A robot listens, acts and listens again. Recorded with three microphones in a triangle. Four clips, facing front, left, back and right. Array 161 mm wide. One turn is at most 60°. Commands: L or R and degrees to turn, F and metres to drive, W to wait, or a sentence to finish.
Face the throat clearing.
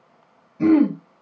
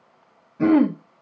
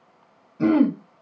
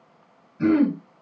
L60
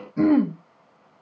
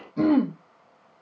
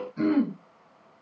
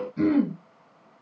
L50
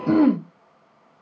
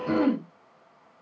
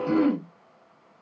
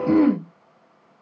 R10
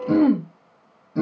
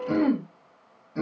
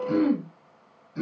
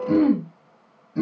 Facing the throat clearing, 1 to 2 m away.